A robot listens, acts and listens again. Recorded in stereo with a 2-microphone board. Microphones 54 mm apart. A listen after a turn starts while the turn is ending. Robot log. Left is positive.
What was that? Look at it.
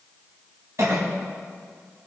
note: The cough: about 70° right or 110° right.
cmd yaw -70
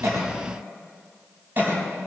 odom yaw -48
note: So it is at 45° right.
cmd yaw -45
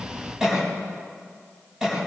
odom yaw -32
note: The cough is now 15° right.
cmd yaw -15
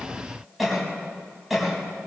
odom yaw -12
end: Facing the cough.